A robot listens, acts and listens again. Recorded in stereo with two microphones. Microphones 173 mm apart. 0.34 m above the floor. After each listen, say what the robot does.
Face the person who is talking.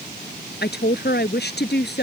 Turn 70° left.
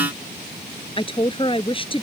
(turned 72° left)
Turn 30° left.
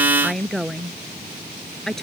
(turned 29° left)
Found it: a woman speaking, straight ahead.